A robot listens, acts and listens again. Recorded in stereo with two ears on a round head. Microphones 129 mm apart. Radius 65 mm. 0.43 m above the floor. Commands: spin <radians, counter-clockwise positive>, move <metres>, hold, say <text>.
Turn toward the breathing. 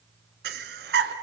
spin -1.57
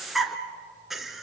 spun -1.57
say Found it: breathing, straight ahead.